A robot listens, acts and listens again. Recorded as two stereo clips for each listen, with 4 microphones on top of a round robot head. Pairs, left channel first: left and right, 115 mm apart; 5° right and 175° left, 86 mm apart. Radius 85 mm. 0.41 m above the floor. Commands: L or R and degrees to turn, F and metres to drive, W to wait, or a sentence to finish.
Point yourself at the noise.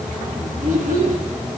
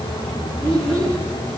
R90
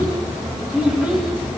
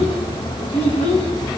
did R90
R10
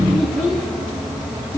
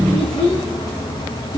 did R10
L10
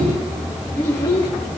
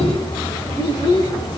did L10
L25
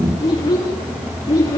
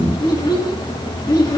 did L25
L25
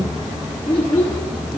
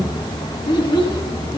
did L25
L10
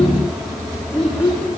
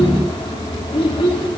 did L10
Found it: a child speaking, straight ahead.